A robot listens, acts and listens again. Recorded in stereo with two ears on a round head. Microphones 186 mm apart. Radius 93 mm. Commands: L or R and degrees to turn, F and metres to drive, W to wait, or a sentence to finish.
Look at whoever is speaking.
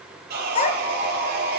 L35
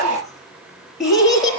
Facing the child speaking.